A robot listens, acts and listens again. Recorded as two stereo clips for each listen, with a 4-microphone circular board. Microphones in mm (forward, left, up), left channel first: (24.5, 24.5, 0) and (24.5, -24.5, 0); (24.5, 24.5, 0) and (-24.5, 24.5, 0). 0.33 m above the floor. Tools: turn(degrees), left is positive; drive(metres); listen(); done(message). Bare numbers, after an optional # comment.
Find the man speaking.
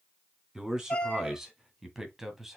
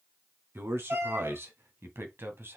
# The man speaking: 170° right.
turn(-170)
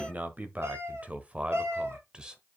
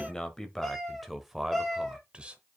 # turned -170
# The man speaking is now 145° right.
turn(-145)
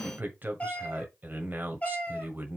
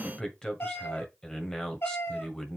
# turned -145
# The man speaking is now 65° right.
turn(-65)
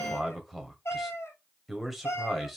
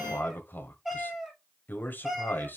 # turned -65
done("Found it: a man speaking, straight ahead, 1 to 2 m away.")